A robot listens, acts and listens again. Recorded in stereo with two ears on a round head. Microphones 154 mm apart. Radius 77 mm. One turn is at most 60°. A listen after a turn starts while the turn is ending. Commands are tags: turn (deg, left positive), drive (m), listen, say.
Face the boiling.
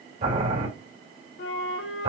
<turn deg="-45"/>
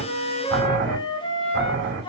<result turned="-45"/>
<turn deg="-60"/>
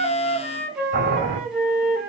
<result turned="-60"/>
<turn deg="-55"/>
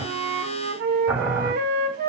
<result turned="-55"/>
<say>Found it: boiling, straight ahead.</say>